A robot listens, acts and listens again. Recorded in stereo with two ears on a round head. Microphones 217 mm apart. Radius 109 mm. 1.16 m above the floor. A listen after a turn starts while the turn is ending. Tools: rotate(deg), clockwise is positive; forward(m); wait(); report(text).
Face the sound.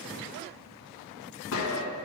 rotate(-60)
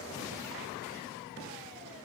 wait()
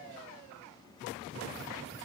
report("I heard a gunshot, but can't make it out now. It was about straight ahead or 60° left.")